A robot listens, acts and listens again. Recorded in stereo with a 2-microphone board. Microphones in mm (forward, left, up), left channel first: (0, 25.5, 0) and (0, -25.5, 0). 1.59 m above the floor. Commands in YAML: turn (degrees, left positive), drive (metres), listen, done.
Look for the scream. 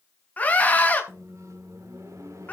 turn: 25
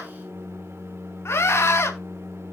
turn: 130
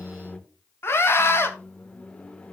turn: 50
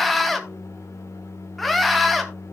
done: "Found it: a scream, straight ahead, 2 to 4 m away."